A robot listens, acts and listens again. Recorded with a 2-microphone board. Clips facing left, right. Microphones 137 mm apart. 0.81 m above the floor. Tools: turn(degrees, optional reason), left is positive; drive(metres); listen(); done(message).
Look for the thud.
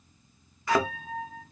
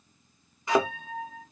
turn(degrees=-20, reason="The thud: about 20° right or 160° right.")
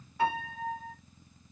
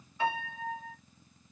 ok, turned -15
listen()
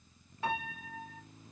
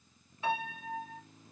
done("I heard a thud, but can't make it out now. It was about 5° right or 145° right.")